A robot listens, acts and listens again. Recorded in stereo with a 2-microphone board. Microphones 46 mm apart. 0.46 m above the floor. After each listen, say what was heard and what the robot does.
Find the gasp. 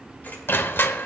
Keep listening.
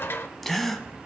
Turn 30° left.
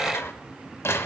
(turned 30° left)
Keep listening.
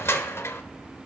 I heard a gasp, but can't make it out now. It was about 30° right or 150° left.